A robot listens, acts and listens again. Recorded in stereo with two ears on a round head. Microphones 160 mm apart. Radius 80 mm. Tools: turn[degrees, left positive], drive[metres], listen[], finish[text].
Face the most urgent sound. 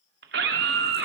Thought: The scream: about 65° right or 115° right.
Action: turn[-65]
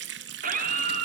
Thought: So it is at 45° right.
Action: turn[-45]
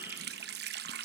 Action: listen[]
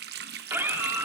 Thought: The scream is now 10° right.
Action: turn[-10]
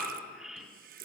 Action: finish[Found it: a scream, straight ahead.]